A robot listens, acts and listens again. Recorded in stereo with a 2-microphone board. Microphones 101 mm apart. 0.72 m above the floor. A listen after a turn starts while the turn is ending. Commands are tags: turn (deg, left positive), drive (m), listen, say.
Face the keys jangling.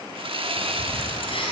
<turn deg="60"/>
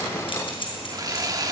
<turn deg="60"/>
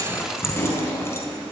<turn deg="30"/>
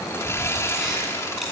<listen/>
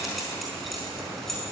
<say>Found it: keys jangling, straight ahead, over 4 m away.</say>